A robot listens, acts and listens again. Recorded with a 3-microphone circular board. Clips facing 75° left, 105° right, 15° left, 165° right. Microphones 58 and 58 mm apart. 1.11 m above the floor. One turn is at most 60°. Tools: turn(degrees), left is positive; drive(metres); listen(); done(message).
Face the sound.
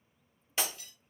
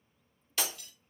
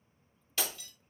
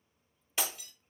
turn(degrees=60)
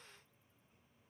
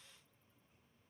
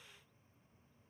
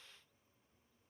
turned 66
turn(degrees=60)
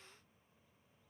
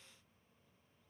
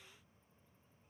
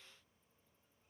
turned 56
turn(degrees=10)
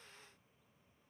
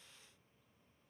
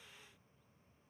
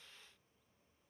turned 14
done("I heard breaking glass from this way, but can't make it out now.")